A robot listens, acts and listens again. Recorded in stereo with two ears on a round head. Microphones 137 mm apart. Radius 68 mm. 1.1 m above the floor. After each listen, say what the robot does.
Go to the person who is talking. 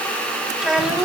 Turn 30° right.
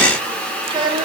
Turn 145° right.
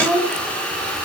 Drive 1.0 m forward.
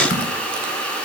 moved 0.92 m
Keep listening.
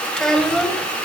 Drive 1.0 m forward.
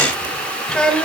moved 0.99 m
Drive 1.0 m forward.
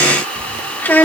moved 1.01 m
Turn 10° left.
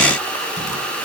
Keep listening.
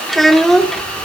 Drive 1.0 m forward.
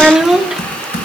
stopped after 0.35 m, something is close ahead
I am next to the child speaking.